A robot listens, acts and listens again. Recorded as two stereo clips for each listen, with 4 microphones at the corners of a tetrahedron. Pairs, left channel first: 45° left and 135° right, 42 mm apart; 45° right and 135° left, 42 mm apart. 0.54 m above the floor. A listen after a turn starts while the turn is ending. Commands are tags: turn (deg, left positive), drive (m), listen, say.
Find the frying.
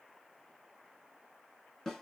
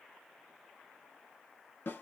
<listen/>
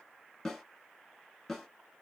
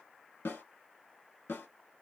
<listen/>
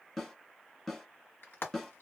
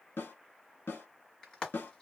<turn deg="30"/>
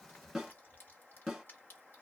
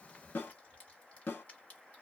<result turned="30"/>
<listen/>
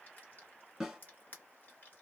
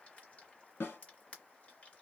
<turn deg="10"/>
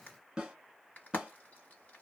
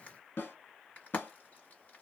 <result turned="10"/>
<listen/>
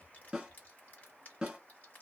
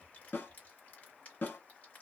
<listen/>
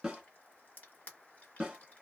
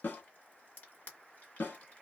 <say>Found it: frying, straight ahead.</say>